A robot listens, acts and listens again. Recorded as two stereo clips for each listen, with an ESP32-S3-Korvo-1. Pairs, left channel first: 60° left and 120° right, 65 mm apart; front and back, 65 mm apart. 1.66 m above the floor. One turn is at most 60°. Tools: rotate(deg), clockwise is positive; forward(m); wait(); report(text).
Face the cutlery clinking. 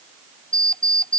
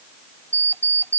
wait()
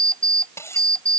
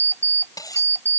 rotate(-15)
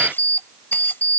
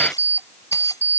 wait()
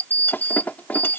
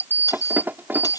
report("Found it: cutlery clinking, straight ahead.")